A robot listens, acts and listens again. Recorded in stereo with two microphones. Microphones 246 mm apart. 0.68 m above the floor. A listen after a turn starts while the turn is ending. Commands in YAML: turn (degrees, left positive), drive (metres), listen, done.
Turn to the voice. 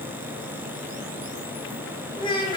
turn: 20
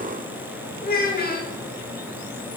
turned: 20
turn: 140
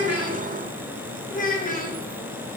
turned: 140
turn: 35
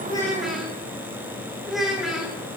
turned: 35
done: "Found it: a child speaking, straight ahead, 1 to 2 m away."